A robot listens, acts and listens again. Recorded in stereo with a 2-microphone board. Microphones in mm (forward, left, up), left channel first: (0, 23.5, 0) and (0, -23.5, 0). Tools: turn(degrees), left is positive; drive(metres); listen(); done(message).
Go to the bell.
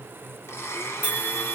turn(degrees=40)
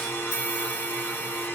turn(degrees=95)
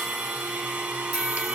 drive(metres=1.0)
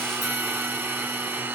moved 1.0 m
listen()
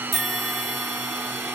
drive(metres=1.0)
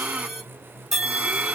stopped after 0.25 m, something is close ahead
done("Arrived at the bell, straight ahead.")